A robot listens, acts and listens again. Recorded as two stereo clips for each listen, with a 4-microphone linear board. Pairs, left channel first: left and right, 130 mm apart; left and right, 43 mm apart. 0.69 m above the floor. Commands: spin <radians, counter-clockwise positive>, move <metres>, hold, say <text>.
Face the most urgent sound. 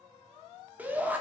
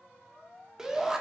spin -0.52
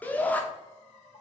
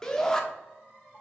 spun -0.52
spin 0.26
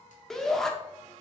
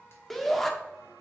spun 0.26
say Facing the shout, 1 to 2 m away.